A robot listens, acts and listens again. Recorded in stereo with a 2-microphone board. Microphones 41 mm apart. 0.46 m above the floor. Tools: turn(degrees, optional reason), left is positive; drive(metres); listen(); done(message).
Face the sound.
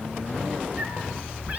turn(degrees=-30, reason="The cat meowing: about 30° right or 150° right.")
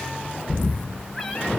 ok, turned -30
done("Found it: a cat meowing, straight ahead, 2 to 4 m away.")